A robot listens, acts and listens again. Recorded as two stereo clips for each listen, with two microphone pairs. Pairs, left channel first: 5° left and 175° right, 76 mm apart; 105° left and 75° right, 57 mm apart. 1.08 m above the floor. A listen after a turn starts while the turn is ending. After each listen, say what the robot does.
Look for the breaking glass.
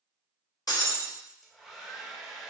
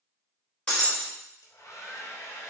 Turn 35° left.
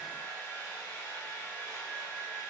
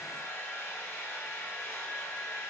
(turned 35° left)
I heard breaking glass from this way, but can't make it out now.